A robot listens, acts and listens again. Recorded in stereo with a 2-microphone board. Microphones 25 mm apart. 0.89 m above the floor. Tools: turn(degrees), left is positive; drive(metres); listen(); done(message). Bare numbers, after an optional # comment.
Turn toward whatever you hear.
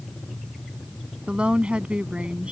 # The woman speaking: about 50° right or 130° right.
turn(-50)
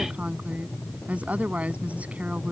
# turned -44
# So it is at 85° right.
turn(-85)
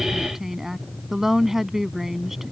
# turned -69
# The woman speaking is now 15° right.
turn(-15)
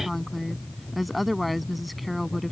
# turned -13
done("Facing the woman speaking.")